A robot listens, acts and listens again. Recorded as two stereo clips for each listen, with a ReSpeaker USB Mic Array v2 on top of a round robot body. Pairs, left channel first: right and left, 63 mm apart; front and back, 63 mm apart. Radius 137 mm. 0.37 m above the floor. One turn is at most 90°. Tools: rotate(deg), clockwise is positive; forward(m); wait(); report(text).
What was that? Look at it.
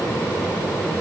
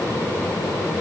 wait()
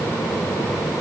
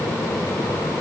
wait()
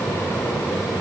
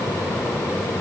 report("I can't make out anything to turn to.")